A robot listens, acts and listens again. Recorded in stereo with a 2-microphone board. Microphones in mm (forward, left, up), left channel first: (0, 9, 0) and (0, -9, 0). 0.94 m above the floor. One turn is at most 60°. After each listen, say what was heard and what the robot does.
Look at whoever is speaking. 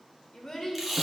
The child speaking: about 30° left or 150° left. Turn 30° left.
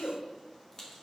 So it is at 120° left. Turn 60° left.
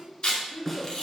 The child speaking is now 90° left. Turn 60° left.
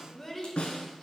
The child speaking is now 15° left. Turn 15° left.
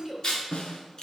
Facing the child speaking.